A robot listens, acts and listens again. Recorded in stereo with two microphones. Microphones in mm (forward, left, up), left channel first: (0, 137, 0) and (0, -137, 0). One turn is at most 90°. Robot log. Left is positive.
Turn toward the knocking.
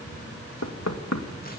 note: The knocking: about 70° left or 110° left.
cmd yaw +70
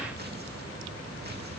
cmd idle
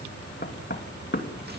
note: So it is at 40° left.
cmd yaw +40
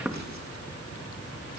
end: Found it: knocking, straight ahead.